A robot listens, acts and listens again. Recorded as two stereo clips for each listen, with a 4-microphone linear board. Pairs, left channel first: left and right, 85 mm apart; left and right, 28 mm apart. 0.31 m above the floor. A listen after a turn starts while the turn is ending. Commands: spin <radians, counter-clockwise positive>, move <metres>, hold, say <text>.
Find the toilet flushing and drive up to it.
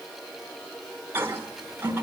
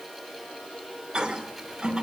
spin -0.52
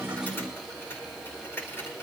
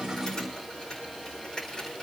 hold
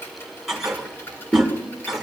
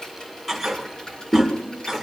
move 1.0
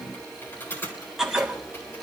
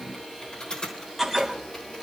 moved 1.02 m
move 1.0
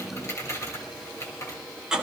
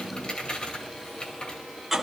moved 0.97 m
spin -0.26
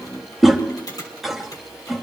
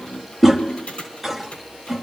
move 1.0
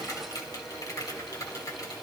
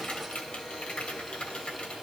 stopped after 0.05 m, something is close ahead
hold
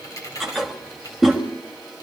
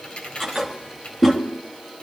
say Arrived at the toilet flushing, straight ahead.